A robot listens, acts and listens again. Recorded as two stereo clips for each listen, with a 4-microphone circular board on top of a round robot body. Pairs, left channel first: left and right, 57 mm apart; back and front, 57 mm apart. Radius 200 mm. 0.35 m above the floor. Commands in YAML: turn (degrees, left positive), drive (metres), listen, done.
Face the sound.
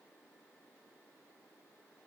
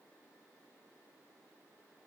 listen: true
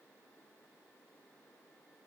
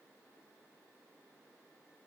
listen: true
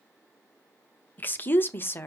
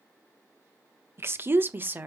turn: 50
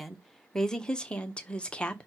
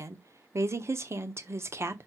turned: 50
turn: 20
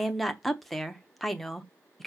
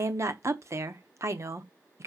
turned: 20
done: "Found it: a woman speaking, straight ahead."